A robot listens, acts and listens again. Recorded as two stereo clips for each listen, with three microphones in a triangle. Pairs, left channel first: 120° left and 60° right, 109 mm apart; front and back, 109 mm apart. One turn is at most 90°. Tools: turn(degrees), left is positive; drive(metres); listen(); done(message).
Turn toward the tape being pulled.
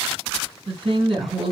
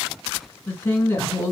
listen()
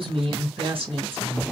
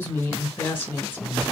listen()
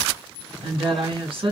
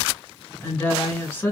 done("I can't make out tape being pulled to turn to.")